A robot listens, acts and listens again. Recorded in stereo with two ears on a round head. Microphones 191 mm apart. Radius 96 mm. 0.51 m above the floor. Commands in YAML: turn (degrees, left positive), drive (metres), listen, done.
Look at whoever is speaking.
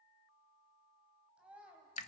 turn: -30
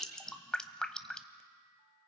listen: true
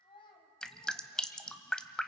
turn: 25
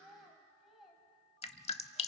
done: "Facing the child speaking."